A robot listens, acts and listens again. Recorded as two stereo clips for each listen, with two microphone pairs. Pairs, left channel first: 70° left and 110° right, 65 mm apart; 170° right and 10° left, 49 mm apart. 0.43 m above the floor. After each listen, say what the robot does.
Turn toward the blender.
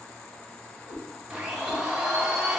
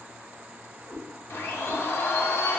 Turn 175° left.
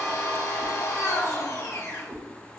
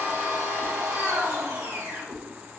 Turn 40° left.
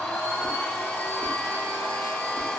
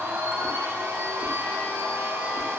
Facing the blender.